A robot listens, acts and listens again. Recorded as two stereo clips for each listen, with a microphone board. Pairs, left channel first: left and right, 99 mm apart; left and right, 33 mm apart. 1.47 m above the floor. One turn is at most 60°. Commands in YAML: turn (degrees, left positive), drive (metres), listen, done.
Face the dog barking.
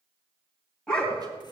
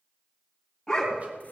turn: 30
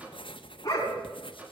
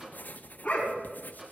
turn: 60
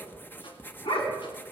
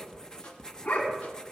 turn: 60
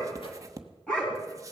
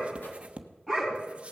turn: 10
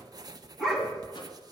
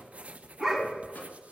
done: "Facing the dog barking, 2 to 4 m away."